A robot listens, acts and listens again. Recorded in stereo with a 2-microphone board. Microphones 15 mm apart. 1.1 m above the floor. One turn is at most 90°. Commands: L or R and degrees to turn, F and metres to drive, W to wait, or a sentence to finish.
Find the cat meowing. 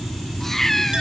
L25
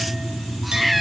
Facing the cat meowing.